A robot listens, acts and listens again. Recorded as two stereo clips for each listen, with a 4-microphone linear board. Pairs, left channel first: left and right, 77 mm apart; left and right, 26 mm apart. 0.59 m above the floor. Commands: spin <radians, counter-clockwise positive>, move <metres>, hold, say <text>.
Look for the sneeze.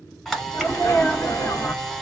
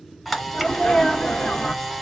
spin 0.61
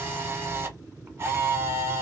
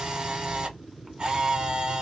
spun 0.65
hold
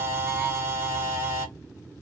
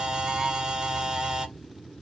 say I heard a sneeze, but can't make it out now. It was about straight ahead or 110° left.